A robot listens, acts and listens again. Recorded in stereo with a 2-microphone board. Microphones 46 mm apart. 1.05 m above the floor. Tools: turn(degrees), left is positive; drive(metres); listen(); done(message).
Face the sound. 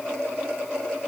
listen()
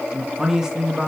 turn(degrees=-30)
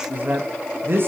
turn(degrees=-130)
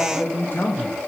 turn(degrees=40)
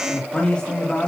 turn(degrees=20)
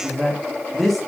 done("Facing the man speaking, 2 to 4 m away.")